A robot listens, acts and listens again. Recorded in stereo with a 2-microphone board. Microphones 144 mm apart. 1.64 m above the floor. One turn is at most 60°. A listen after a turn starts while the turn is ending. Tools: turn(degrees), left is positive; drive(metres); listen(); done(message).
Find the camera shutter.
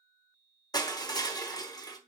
listen()
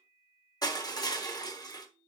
listen()
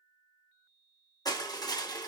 done("I can't make out a camera shutter, only crushing.")